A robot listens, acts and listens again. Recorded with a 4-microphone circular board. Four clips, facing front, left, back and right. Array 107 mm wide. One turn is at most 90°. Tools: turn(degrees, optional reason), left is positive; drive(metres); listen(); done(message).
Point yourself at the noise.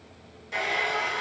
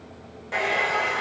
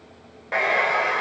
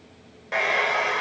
turn(degrees=-90, reason="The hair dryer: 170° right.")
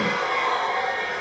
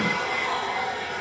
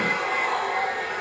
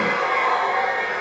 turn(degrees=-80, reason="The hair dryer is now 80° right.")
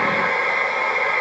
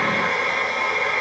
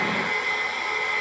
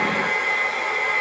turn(degrees=10, reason="The hair dryer is now 10° left.")
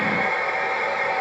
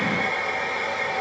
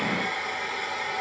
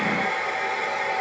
done("Facing the hair dryer.")